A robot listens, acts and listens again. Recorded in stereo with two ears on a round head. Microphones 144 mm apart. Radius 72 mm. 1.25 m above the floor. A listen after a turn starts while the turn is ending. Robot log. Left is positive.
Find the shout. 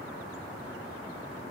cmd idle
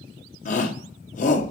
note: The shout: about 50° left or 130° left.
cmd yaw +50
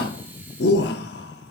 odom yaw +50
note: So it is at 80° left.
cmd yaw +80
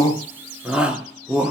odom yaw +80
end: Found it: a shout, straight ahead.